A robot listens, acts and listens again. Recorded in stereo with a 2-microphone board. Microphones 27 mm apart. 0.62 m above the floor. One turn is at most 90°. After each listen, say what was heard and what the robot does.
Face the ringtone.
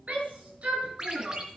The ringtone: about 30° right or 150° right. Turn 30° right.
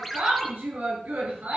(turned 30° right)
Found it: a ringtone, straight ahead, 2 to 4 m away.